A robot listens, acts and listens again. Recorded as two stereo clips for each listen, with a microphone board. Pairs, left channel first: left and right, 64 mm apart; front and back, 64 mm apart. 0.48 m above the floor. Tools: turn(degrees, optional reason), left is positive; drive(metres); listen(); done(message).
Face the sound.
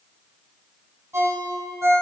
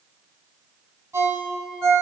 turn(degrees=-135, reason="The ringtone: 135° right.")
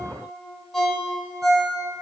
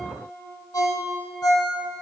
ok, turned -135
done("Found it: a ringtone, straight ahead, 1 to 2 m away.")